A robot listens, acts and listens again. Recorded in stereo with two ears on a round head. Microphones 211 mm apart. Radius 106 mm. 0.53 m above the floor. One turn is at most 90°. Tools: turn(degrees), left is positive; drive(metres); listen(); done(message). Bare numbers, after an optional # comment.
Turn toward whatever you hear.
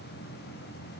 listen()
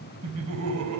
# The laughter: about 70° right or 110° right.
turn(-70)
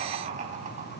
# So it is at 35° right.
turn(-35)
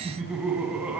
done("Found it: laughter, straight ahead.")